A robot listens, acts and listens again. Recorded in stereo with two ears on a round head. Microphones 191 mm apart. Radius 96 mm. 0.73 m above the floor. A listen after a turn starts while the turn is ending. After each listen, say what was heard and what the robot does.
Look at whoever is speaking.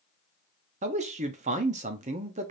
The man speaking: about 30° right or 150° right. Turn 30° right.
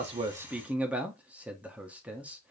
So it is at 10° right. Turn 10° right.
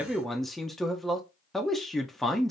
Facing the man speaking, under 1 m away.